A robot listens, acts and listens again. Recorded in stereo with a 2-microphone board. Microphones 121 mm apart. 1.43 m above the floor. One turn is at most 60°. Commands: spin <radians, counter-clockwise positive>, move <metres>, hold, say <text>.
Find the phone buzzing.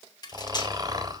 hold
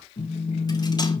spin 1.05
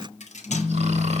spin 0.17
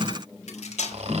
say Found it: a phone buzzing, straight ahead, 1 to 2 m away.